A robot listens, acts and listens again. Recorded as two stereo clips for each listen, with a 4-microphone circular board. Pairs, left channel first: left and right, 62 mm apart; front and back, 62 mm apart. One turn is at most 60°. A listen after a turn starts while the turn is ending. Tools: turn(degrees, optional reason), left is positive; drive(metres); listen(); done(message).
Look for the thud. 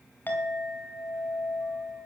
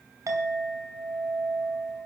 listen()
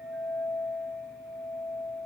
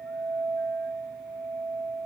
listen()
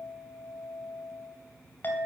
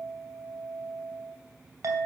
done("I can't make out a thud, only a clink.")